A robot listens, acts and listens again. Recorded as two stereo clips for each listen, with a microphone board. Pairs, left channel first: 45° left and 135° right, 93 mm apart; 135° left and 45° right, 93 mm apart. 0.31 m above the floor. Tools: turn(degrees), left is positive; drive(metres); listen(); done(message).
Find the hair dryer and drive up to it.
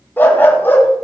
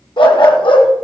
listen()
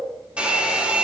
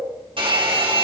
turn(degrees=-60)
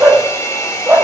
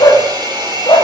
turn(degrees=-10)
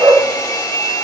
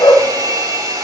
drive(metres=1.0)
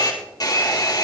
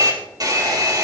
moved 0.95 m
drive(metres=1.0)
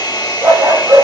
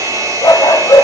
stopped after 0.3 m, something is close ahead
done("Something is in my way. I am facing the hair dryer but have not reached it.")